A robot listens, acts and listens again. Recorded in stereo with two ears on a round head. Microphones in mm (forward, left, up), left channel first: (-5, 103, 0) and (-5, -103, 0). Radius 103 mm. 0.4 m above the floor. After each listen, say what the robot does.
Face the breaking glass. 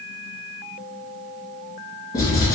Keep listening.
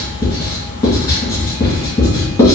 Keep listening.
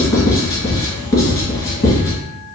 I can't make out breaking glass, only writing.